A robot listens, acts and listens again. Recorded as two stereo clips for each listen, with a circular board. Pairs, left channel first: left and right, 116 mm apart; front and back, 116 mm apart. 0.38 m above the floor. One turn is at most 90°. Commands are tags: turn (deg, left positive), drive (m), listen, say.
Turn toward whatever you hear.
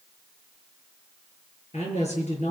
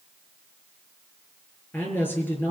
<turn deg="75"/>
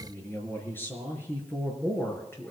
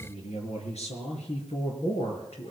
<turn deg="20"/>
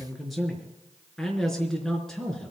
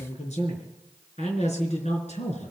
<say>Found it: a man speaking, straight ahead.</say>